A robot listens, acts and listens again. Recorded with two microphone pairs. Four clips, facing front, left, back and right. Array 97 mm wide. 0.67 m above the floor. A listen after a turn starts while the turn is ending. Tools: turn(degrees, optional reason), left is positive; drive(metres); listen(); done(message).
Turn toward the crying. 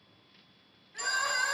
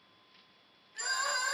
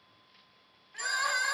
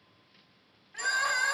turn(degrees=-115, reason="The crying: 115° right.")
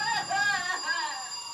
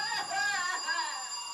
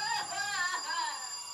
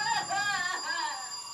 turn(degrees=-15, reason="The crying is now 15° right.")
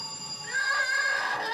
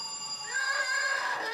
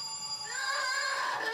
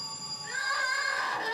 done("Found it: crying, straight ahead, 1 to 2 m away.")